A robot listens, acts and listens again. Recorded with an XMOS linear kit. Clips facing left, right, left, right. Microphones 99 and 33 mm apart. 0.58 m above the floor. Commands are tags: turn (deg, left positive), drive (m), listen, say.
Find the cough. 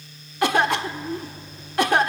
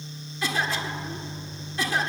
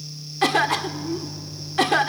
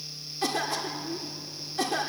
<turn deg="60"/>
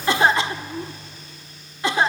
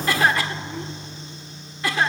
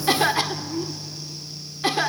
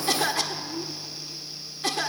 <turn deg="25"/>
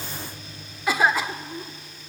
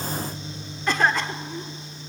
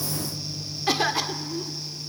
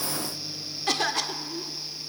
<turn deg="10"/>
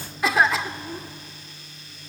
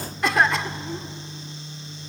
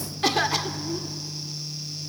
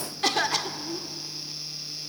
<say>Facing the cough, 1 to 2 m away.</say>